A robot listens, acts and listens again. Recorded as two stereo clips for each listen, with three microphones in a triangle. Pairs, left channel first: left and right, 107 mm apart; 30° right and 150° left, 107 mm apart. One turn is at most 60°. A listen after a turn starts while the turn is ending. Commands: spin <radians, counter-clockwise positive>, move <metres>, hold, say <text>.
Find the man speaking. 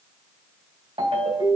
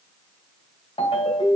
hold
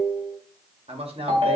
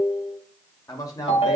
spin -1.05
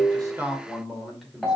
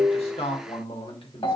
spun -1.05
say Found it: a man speaking, straight ahead, 2 to 4 m away.